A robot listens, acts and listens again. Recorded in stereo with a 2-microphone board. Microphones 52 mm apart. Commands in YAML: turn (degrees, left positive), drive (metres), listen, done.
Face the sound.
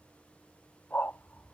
turn: 40
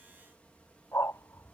turn: 95
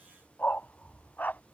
turn: 40
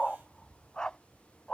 turn: 15
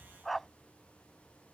done: "Found it: a dog barking, straight ahead."